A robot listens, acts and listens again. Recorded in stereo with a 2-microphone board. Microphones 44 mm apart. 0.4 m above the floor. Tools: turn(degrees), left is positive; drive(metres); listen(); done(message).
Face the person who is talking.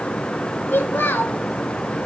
turn(degrees=55)
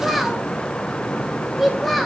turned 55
done("Facing the child speaking, 1 to 2 m away.")